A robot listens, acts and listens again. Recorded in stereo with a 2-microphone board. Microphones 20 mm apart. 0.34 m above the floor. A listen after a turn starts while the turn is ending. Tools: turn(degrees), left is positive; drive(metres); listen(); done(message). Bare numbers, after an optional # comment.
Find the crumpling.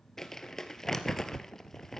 # The crumpling: about 25° left or 155° left.
turn(25)
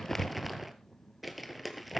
done("Facing the crumpling, 1 to 2 m away.")